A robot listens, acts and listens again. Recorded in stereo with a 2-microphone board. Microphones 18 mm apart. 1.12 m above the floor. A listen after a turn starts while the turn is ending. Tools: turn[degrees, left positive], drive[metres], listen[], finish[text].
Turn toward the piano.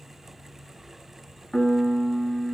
Thought: The piano: about 50° left or 130° left.
Action: turn[50]
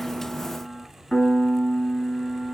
Thought: So it is at 75° left.
Action: turn[75]
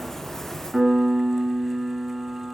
Action: finish[Found it: a piano, straight ahead, 2 to 4 m away.]